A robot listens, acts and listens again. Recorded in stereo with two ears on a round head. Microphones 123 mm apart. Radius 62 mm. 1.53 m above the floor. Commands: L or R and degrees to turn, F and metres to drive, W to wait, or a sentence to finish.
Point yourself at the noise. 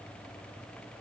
W
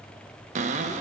R55
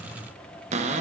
R60
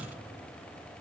W
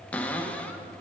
L10
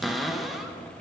Facing the cupboard door, 1 to 2 m away.